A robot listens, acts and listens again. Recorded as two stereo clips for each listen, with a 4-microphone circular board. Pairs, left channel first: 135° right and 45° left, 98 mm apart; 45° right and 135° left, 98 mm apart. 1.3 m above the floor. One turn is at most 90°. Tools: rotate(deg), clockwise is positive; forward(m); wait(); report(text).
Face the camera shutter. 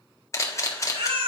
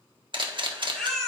rotate(-90)
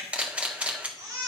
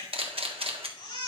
rotate(-90)
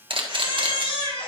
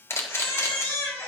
rotate(-20)
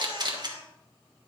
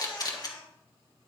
report("Facing the camera shutter, 1 to 2 m away.")